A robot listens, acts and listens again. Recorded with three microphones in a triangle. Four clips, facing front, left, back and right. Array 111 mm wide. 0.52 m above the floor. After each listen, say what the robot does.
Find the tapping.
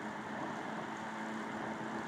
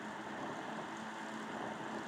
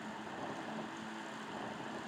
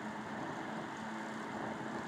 Keep listening.
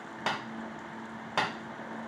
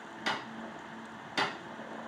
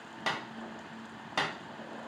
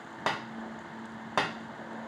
Turn 85° right.
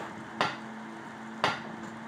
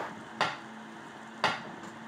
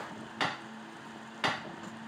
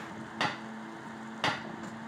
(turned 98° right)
Turn 10° left.
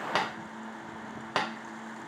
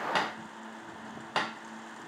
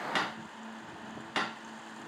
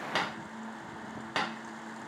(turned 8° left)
Facing the tapping, under 1 m away.